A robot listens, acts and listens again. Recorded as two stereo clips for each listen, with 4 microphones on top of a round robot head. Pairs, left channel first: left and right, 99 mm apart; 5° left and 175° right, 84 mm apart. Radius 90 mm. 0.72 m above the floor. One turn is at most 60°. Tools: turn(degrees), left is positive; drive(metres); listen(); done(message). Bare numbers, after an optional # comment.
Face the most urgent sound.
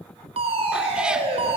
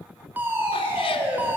# The fire alarm: 105° right.
turn(-60)
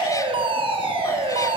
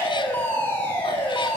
# The fire alarm is now 65° right.
turn(-60)
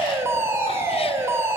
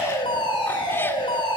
# The fire alarm is now 25° right.
turn(-25)
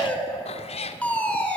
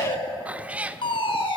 # The fire alarm is now 15° left.
turn(15)
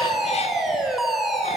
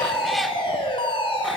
done("Facing the fire alarm.")